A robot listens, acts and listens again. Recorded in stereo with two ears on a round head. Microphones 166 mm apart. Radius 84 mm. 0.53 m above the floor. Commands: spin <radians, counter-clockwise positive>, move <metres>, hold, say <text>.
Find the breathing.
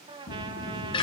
spin 1.57
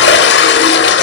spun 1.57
hold
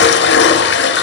hold
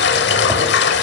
say I heard breathing from this way, but can't make it out now.